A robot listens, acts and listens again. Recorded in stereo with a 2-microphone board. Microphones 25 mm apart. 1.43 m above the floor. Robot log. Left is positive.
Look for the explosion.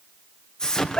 note: The explosion: about 30° left or 150° left.
cmd yaw +30
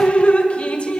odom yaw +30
cmd idle
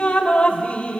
end: I heard an explosion, but can't make it out now. It was about straight ahead or 120° left.